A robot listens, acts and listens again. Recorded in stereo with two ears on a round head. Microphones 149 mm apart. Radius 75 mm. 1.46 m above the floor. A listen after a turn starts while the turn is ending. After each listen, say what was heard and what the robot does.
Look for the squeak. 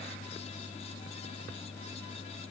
Keep listening.
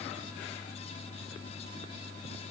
Keep listening.
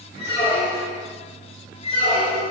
The squeak: about 35° left or 145° left. Turn 35° left.
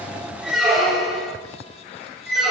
Facing the squeak.